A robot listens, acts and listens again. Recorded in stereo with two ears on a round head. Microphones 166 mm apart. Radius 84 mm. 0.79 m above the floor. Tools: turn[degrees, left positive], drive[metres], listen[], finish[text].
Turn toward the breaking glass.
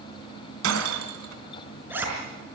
Action: turn[-90]
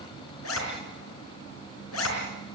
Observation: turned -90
Action: finish[I heard breaking glass from this way, but can't make it out now.]